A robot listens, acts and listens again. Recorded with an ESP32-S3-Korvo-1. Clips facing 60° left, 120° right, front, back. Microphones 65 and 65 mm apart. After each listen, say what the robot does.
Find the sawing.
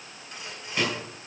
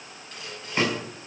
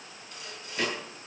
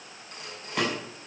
Turn 135° left.
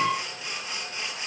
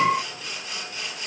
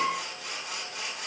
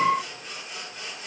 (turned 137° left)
Found it: sawing, straight ahead, over 4 m away.